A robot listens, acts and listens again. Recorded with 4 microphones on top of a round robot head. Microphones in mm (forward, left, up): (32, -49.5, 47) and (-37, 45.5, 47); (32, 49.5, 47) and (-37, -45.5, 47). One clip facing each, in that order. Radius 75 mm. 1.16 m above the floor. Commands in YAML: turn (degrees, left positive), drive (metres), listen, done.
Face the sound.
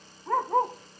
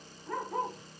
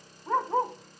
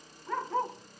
turn: -10
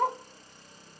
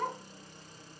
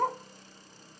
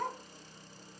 done: "Facing the dog barking, 1 to 2 m away."